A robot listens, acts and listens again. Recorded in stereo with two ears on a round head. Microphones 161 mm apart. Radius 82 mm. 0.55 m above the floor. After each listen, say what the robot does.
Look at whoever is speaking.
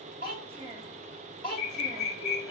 Turn 30° right.
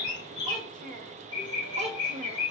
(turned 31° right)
Turn 40° right.
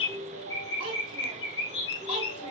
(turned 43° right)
Turn 130° right.
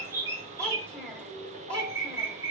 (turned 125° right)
Facing the child speaking.